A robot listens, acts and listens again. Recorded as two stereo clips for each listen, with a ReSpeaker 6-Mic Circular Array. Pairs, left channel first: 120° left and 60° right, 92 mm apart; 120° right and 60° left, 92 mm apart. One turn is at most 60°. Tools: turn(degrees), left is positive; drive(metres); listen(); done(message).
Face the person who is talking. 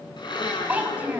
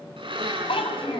turn(degrees=-60)
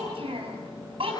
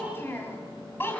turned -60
turn(degrees=-55)
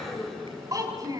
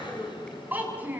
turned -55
turn(degrees=-10)
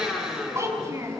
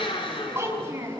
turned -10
done("Facing the child speaking.")